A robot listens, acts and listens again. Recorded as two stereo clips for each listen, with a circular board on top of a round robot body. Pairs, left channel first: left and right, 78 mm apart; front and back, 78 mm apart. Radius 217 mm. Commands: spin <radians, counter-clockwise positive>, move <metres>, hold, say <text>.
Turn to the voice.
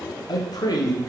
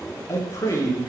spin 0.87
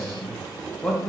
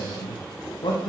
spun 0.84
say Found it: a man speaking, straight ahead.